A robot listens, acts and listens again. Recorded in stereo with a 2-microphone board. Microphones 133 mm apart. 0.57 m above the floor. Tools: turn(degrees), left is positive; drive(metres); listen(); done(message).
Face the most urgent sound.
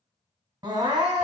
turn(degrees=-35)
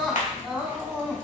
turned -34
done("Found it: crying, straight ahead, under 1 m away.")